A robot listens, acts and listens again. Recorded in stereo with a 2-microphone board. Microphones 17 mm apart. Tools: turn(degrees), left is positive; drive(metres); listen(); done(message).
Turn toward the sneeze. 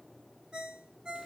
listen()
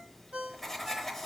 listen()
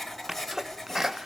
turn(degrees=-25)
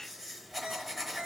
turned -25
listen()
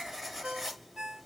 done("I heard a sneeze, but can't make it out now. It was about straight ahead or 130° right.")